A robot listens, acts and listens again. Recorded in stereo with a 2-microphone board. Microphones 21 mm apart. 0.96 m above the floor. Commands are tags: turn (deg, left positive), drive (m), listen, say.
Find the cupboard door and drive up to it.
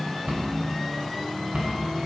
<turn deg="-90"/>
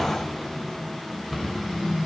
<drive m="1.0"/>
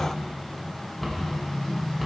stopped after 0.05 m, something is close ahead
<say>Something is in my way. I am facing the cupboard door but have not reached it.</say>